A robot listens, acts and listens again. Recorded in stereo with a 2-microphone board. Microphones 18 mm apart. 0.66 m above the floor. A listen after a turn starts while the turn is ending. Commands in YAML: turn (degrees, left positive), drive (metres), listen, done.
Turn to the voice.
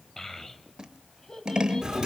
turn: 30
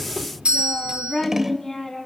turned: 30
turn: 15
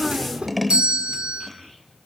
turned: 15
done: "Facing the child speaking."